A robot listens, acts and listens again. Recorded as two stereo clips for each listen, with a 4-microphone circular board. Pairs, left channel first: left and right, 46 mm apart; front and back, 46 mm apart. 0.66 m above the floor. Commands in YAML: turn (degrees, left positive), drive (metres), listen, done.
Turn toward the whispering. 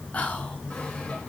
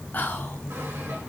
turn: 35
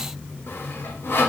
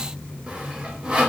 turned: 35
listen: true
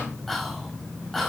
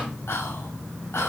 done: "Facing the whispering, 1 to 2 m away."